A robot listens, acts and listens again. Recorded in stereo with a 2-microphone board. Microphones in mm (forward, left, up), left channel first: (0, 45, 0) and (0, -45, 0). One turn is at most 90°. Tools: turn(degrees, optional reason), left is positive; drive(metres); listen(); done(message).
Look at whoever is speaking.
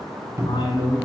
turn(degrees=65, reason="The man speaking: about 65° left or 115° left.")
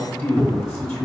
turn(degrees=30, reason="So it is at 30° left.")
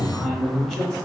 done("Found it: a man speaking, straight ahead.")